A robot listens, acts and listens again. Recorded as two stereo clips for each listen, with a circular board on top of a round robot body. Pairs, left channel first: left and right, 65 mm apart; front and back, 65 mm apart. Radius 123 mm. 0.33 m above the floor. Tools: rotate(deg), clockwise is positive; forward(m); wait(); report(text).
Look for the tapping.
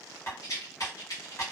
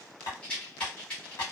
rotate(-35)
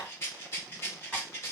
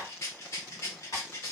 wait()
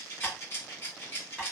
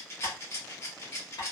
rotate(-10)
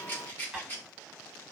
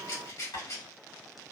report("Facing the tapping, 1 to 2 m away.")